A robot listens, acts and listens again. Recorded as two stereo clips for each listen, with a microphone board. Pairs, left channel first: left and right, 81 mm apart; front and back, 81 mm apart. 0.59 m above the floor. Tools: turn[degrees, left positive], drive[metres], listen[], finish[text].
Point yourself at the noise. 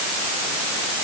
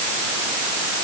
Action: listen[]
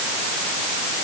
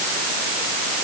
Action: listen[]
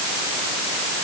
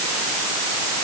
Action: finish[I can't make out anything to turn to.]